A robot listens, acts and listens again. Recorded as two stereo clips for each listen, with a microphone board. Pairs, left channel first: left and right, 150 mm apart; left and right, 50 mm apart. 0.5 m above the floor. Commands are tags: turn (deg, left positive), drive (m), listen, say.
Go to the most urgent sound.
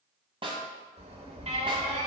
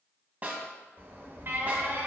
<turn deg="-50"/>
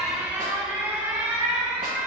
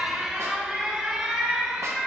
<turn deg="-15"/>
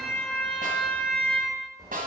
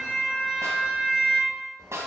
<drive m="1.0"/>
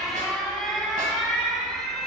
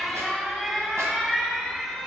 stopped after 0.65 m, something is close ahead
<say>Arrived at the alarm, straight ahead.</say>